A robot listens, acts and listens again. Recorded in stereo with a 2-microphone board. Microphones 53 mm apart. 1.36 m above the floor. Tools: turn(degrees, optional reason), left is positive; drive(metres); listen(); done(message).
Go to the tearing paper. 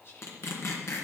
turn(degrees=60, reason="The tearing paper: about 60° left or 120° left.")
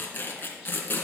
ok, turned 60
turn(degrees=40, reason="So it is at 40° left.")
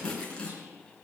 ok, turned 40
turn(degrees=20, reason="The tearing paper is now 20° left.")
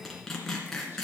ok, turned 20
drive(metres=1.0)
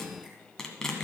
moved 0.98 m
turn(degrees=15, reason="The tearing paper is now 15° left.")
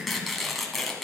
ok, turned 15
drive(metres=1.0)
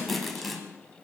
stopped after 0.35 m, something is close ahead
done("I am next to the tearing paper.")